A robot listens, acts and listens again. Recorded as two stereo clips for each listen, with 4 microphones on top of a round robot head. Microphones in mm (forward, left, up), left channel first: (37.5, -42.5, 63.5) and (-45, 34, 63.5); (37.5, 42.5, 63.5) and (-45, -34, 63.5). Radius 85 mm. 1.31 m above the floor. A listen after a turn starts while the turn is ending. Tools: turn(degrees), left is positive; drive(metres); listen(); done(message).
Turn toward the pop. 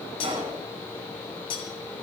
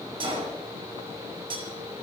turn(degrees=180)
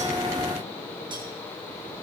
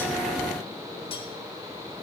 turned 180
done("I heard a pop from this way, but can't make it out now.")